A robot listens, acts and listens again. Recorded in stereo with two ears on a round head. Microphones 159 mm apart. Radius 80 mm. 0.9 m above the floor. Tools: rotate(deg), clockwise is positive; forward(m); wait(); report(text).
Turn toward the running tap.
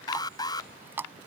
rotate(30)
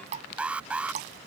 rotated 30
rotate(135)
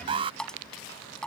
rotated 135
report("Found it: a running tap, straight ahead.")